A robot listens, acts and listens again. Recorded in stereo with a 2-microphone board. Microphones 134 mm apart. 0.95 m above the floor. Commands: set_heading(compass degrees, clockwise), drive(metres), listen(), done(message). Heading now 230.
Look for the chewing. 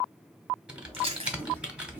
set_heading(275)
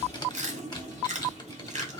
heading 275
set_heading(0)
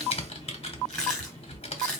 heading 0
done("Facing the chewing.")